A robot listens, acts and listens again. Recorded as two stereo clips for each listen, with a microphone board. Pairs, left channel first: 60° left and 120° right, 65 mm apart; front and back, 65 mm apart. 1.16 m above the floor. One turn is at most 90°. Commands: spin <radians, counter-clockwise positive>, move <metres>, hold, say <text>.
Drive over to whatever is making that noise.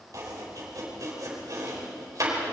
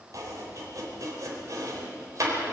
spin -1.57
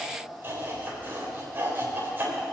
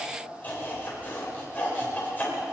spin -1.05
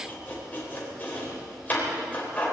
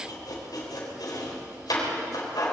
move 1.0
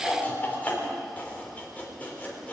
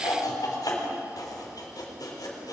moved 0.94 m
move 1.0
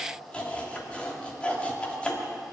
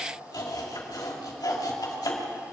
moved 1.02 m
spin -0.17
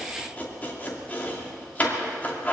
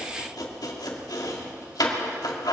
move 1.0
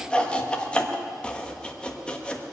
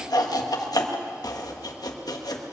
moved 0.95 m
spin -0.26
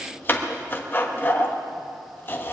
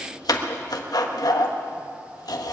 move 1.0
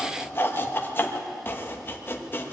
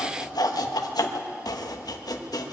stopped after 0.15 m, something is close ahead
say I am next to the chopping.